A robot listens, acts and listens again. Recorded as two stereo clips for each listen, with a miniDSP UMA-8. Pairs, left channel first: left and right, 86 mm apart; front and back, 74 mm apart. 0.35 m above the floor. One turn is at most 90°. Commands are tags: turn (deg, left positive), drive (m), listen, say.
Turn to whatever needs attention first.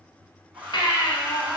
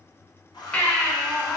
<turn deg="75"/>
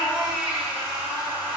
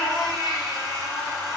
<say>Facing the baby crying, 1 to 2 m away.</say>